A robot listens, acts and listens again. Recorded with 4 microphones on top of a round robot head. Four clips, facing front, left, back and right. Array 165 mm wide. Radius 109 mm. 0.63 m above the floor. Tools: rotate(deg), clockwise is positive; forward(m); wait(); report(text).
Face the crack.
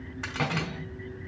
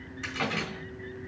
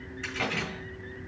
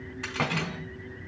rotate(15)
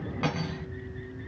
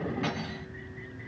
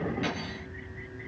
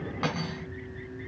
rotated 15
report("Facing where the crack came from. I can't hear it now.")